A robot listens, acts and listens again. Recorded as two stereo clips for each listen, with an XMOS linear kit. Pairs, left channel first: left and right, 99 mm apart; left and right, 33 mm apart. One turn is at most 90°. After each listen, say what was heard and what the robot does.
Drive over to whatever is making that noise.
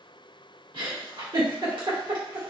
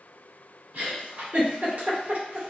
The giggle: about 60° right or 120° right. Turn 60° right.
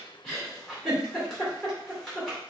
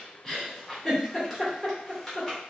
Drive 1.0 m forward.
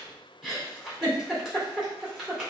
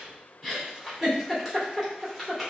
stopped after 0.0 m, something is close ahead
Blocked. The giggle is further on, straight ahead.